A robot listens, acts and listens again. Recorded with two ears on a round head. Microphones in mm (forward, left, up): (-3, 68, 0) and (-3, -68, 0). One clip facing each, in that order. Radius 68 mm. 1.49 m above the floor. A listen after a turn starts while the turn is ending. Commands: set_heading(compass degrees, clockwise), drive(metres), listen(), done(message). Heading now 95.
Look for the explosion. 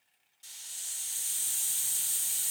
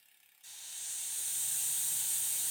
listen()
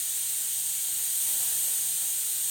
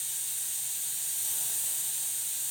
listen()
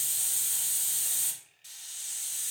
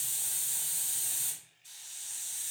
done("I can't make out an explosion to turn to.")